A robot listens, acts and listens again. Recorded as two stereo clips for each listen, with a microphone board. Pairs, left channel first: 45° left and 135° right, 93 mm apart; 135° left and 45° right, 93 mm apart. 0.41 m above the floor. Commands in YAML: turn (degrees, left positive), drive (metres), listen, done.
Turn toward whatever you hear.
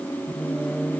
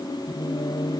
turn: 140
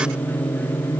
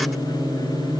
done: "Found it: singing, straight ahead."